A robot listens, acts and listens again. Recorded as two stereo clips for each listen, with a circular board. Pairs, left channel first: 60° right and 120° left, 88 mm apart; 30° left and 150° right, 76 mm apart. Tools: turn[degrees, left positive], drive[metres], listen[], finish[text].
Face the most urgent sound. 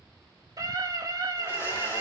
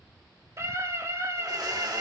Thought: The scream: 160° left.
Action: turn[160]
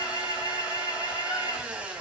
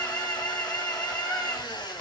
Thought: The scream is now 30° right.
Action: turn[-30]
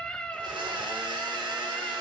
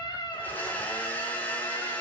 Thought: The scream is now 20° left.
Action: turn[20]
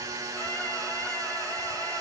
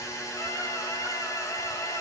Action: listen[]
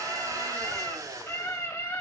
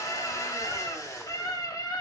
Action: finish[Found it: a scream, straight ahead, 2 to 4 m away.]